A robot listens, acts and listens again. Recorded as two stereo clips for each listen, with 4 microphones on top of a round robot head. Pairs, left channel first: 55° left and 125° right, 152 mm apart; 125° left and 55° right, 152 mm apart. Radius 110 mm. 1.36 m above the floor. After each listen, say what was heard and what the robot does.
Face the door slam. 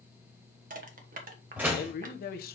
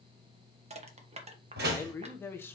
The door slam: 45° right. Turn 45° right.
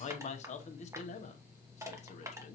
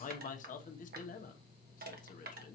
I heard a door slam from this way, but can't make it out now.